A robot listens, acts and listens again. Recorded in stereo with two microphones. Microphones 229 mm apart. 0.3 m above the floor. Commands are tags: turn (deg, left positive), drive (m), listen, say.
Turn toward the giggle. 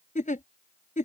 <turn deg="35"/>
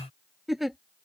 <say>Found it: a giggle, straight ahead.</say>